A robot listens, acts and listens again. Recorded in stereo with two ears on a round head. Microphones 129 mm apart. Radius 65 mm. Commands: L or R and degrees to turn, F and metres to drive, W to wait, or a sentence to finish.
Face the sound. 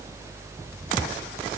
W
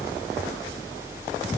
W
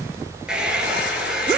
R30
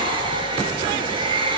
R140
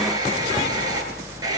R25
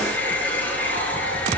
L10
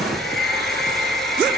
Facing the hair dryer.